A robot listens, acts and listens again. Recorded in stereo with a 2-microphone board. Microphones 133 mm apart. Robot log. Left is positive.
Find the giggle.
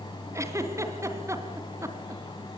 note: The giggle: about 20° right or 160° right.
cmd yaw -20
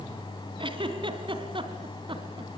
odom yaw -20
note: So it is at 140° right.
cmd yaw -140
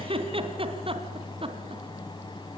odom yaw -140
note: The giggle is now 45° right.
cmd yaw -45
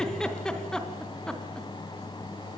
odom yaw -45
end: Found it: a giggle, straight ahead, 2 to 4 m away.